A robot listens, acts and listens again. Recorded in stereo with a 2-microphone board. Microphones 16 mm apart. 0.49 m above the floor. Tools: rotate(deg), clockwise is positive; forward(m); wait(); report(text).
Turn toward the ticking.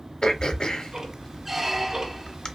rotate(55)
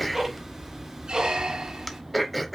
rotate(25)
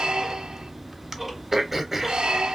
report("Found it: ticking, straight ahead.")